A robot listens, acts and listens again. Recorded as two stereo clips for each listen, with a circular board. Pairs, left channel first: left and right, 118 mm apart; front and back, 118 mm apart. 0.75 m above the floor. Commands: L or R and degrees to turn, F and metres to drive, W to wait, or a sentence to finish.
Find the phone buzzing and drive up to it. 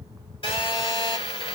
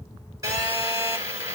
L125
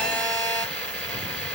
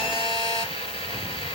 L15
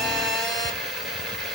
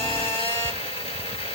F1.0
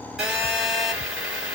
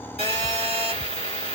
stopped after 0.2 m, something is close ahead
Something is in my way. I am facing the phone buzzing but have not reached it.